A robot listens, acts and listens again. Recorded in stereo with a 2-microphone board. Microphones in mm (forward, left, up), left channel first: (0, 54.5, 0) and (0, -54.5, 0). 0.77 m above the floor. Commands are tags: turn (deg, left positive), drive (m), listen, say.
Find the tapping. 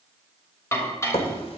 <turn deg="65"/>
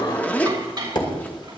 <turn deg="50"/>
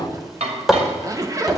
<say>Facing the tapping.</say>